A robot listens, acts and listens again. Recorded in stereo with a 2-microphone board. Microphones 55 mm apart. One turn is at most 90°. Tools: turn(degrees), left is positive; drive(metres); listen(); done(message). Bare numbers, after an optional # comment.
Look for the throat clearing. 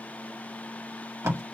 listen()
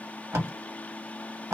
listen()
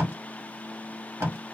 done("I can't make out throat clearing to turn to.")